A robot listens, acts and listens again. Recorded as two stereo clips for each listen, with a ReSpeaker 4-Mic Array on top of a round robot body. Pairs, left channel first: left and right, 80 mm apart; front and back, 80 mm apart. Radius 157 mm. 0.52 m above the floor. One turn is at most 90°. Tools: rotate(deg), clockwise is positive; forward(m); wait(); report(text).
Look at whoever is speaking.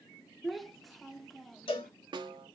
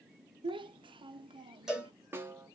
rotate(-90)
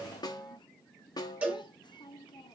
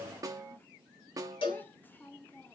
rotate(-65)
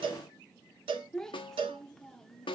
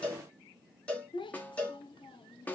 report("Facing the child speaking, under 1 m away.")